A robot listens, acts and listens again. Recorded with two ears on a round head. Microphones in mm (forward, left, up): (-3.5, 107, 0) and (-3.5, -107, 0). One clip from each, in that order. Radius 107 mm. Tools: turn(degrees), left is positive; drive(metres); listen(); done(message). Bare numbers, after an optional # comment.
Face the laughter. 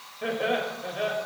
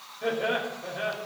# The laughter: about 15° left or 165° left.
turn(15)
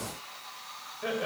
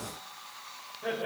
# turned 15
# So it is at 150° left.
turn(150)
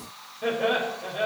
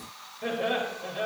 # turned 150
done("Facing the laughter.")